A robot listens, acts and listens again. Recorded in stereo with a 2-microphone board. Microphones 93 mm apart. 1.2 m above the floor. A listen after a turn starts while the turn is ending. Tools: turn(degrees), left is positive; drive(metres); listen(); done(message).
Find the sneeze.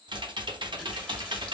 listen()
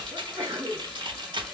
turn(degrees=-65)
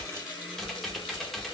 listen()
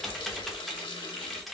done("I heard a sneeze, but can't make it out now. It was about straight ahead or 50° right.")